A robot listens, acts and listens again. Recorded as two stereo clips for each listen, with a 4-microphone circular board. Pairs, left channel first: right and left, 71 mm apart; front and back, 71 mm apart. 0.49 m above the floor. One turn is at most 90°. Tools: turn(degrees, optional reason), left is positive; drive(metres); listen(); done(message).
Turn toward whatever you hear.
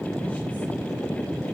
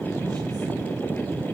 listen()
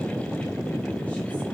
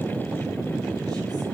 listen()
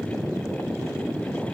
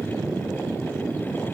done("I can't make out anything to turn to.")